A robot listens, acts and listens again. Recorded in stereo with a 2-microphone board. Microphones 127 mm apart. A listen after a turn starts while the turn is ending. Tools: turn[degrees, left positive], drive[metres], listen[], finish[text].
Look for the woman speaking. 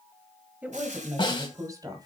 Thought: The woman speaking: about 30° right or 150° right.
Action: turn[-30]
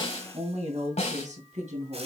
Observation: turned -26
Thought: So it is at 110° right.
Action: turn[-110]
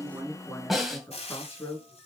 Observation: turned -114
Thought: The woman speaking is now 20° left.
Action: turn[20]
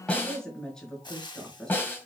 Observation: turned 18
Action: finish[Facing the woman speaking.]